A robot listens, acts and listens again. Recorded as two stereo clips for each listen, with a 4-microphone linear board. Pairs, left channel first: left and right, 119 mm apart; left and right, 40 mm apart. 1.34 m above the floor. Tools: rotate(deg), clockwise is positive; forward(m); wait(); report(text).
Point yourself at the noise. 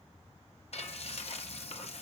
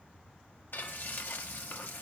rotate(-65)
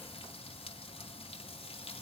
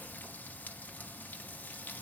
rotate(-55)
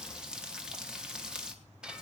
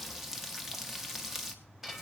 report("Facing the frying, 1 to 2 m away.")